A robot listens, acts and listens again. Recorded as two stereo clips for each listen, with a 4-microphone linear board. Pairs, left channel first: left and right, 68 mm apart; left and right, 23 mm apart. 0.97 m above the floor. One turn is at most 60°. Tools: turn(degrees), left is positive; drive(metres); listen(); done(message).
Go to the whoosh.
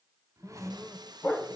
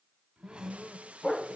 turn(degrees=-45)
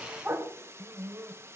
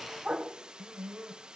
listen()
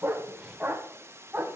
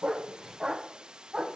listen()
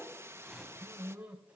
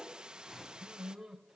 drive(metres=1.0)
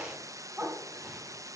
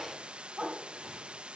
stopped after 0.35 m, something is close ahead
listen()
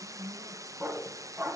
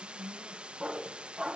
listen()
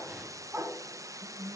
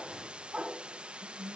done("I heard a whoosh from this way, but can't make it out now. I did not reach it.")